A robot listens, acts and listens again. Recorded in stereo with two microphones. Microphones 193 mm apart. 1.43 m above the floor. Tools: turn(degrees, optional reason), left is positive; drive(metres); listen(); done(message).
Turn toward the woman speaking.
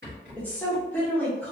turn(degrees=30)
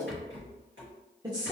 turn(degrees=-20, reason="So it is at 20° right.")
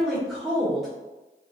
done("Facing the woman speaking, 1 to 2 m away.")